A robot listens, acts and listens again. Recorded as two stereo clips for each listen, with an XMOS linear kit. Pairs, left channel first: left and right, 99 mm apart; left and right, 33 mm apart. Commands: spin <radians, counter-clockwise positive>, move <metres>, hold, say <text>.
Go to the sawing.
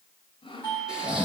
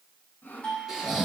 spin 1.05
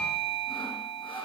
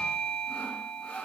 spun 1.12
spin 0.96
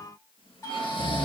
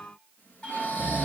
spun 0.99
hold
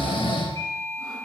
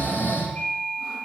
hold
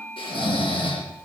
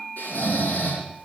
say I heard sawing from this way, but can't make it out now. I did not reach it.